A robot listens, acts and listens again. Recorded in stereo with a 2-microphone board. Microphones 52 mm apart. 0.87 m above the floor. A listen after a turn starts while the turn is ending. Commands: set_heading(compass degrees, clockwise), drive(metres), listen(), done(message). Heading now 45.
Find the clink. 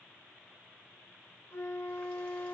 listen()
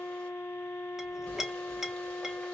set_heading(75)
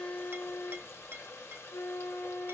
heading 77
set_heading(212)
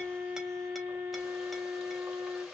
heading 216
listen()
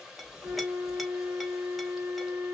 listen()
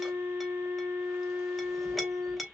done("Facing the clink.")